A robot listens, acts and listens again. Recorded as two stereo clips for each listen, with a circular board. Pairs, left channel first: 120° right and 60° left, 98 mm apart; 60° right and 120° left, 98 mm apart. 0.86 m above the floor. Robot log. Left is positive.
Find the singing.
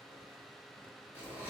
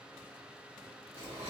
cmd idle
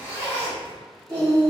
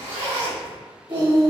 note: The singing: 100° left.
cmd yaw +100
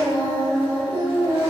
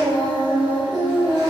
note: The singing is now 55° left.
cmd yaw +55
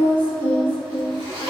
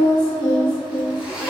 note: The singing is now 30° left.
cmd yaw +30
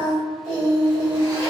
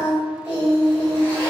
end: Facing the singing.